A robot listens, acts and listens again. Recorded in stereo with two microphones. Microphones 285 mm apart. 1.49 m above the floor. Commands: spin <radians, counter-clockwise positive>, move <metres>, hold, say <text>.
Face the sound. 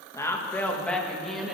spin 0.52
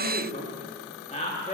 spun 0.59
spin 2.71
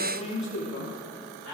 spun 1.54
spin 1.40
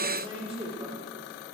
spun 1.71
spin -0.35
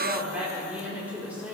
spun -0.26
say Found it: a woman speaking, straight ahead, over 4 m away.